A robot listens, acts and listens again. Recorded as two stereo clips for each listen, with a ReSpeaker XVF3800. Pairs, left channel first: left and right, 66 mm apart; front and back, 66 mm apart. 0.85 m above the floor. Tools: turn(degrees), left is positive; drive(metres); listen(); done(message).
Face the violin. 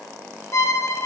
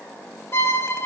turn(degrees=50)
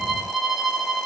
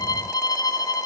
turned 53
done("Facing the violin.")